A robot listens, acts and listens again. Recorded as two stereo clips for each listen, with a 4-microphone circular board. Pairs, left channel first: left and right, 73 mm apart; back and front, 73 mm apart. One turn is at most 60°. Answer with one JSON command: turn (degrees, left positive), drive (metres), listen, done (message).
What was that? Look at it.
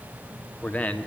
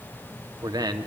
{"turn": 20}
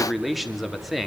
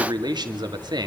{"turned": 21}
{"done": "Facing the man speaking, 2 to 4 m away."}